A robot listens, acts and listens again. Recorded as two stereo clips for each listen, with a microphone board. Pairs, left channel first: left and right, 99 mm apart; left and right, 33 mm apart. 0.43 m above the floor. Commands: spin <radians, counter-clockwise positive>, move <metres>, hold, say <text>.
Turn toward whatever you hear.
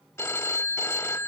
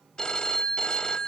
spin 0.44
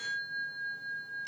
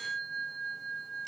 say Facing the phone ringing.